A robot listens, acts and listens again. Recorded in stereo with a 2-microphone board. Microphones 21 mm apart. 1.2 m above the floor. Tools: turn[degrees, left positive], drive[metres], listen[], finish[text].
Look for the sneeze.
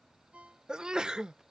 Thought: The sneeze: about 40° right or 140° right.
Action: turn[-40]
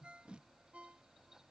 Action: listen[]
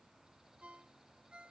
Action: finish[I heard a sneeze, but can't make it out now. It was about straight ahead or 100° right.]